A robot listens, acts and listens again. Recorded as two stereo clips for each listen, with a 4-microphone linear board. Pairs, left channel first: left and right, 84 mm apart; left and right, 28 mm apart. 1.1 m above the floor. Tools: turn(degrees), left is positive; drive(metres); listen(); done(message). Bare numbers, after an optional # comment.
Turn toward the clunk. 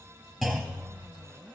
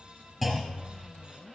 turn(30)
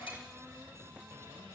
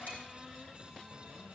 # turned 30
listen()
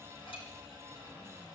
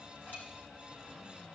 done("I heard a clunk, but can't make it out now. It was about 30° right or 150° left.")